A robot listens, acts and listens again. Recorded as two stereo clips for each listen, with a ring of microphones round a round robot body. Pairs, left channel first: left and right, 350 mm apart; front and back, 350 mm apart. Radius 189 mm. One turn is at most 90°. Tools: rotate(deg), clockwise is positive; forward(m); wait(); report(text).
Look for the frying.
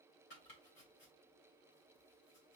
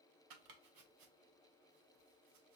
wait()
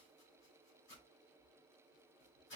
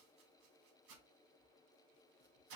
wait()
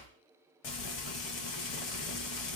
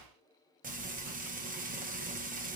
rotate(-90)
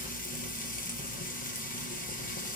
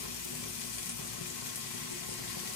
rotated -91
rotate(-20)
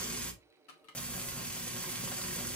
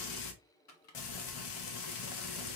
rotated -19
report("Facing the frying.")